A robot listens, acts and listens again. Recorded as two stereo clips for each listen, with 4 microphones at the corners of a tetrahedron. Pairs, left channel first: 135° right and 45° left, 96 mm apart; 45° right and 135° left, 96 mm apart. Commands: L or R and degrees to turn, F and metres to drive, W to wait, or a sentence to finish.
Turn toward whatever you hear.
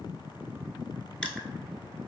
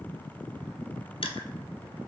W
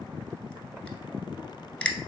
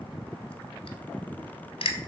R55
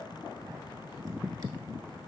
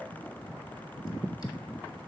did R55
W
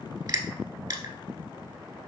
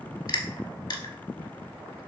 Found it: crushing, straight ahead.